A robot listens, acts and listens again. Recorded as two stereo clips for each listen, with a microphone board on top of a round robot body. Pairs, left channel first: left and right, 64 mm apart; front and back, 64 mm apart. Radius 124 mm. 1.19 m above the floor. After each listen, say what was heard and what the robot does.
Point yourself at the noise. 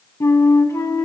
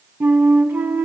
The flute: 120° left. Turn 120° left.
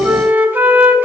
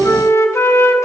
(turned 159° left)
The flute is now 40° right. Turn 40° right.
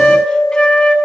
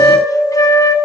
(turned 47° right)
The flute is now 10° left. Turn 10° left.
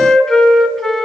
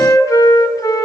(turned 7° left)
Facing the flute, 1 to 2 m away.